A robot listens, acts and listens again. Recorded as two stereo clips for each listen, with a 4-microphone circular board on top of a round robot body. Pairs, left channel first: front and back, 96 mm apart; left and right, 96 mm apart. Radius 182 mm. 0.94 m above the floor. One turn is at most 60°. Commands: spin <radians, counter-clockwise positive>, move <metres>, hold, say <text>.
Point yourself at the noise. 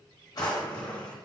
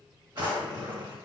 spin -0.79
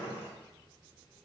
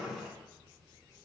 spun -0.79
say Facing the drawer, 1 to 2 m away.